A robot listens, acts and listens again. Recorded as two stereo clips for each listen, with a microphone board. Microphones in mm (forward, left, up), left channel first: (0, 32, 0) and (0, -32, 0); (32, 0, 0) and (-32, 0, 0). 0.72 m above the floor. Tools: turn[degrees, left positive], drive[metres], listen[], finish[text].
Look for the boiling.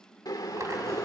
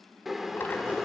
Thought: The boiling: 95° left.
Action: turn[95]
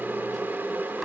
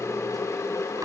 Thought: The boiling is now 35° right.
Action: turn[-35]
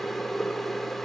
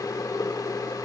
Action: finish[Found it: boiling, straight ahead, 1 to 2 m away.]